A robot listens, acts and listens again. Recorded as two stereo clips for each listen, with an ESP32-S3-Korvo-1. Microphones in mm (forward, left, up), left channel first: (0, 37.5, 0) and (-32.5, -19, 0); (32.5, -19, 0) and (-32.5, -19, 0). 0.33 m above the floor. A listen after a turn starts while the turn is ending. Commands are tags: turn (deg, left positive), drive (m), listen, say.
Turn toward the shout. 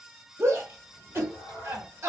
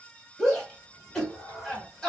<turn deg="-75"/>
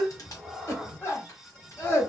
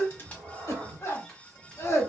<turn deg="20"/>
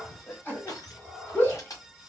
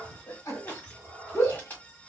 <say>Facing the shout.</say>